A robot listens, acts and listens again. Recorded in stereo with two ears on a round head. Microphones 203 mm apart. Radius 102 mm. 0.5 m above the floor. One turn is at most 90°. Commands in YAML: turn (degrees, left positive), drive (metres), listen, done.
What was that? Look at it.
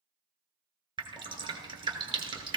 turn: -20
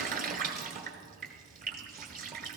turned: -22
turn: -90
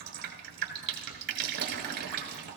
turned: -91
turn: -45
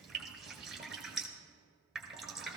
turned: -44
done: "Found it: dripping, straight ahead."